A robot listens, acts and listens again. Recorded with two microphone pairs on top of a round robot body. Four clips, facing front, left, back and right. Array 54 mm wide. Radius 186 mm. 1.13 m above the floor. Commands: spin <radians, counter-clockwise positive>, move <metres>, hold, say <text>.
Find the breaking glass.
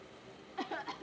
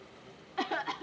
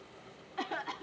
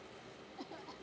hold
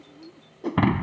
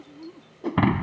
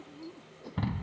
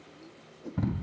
spin 0.70
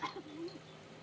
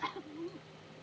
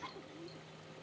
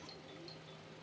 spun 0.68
say Facing where the breaking glass came from. I can't hear it now.